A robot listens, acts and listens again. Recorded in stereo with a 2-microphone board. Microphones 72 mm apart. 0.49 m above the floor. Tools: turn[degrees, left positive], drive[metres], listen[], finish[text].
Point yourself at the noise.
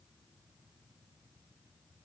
Action: listen[]
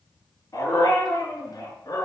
Thought: The dog barking: about 65° left or 115° left.
Action: turn[65]
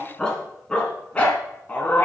Thought: So it is at 25° left.
Action: turn[25]
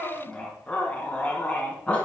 Thought: The dog barking is now 15° left.
Action: turn[15]
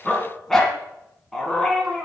Action: finish[Facing the dog barking.]